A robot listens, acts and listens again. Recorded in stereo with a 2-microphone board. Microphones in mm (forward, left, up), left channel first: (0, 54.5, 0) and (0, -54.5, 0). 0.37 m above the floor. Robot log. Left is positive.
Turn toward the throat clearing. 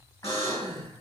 note: The throat clearing: about 35° left or 145° left.
cmd yaw +35
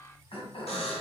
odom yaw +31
note: So it is at 110° left.
cmd yaw +110
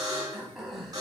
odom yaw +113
end: Found it: throat clearing, straight ahead.